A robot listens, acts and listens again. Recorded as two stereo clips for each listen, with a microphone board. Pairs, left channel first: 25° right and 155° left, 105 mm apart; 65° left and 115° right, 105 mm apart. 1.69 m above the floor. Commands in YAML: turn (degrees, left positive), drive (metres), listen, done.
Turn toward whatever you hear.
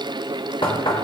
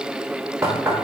turn: -55
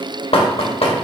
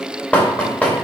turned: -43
turn: -10
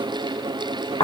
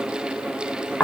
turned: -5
done: "Found it: knocking, straight ahead."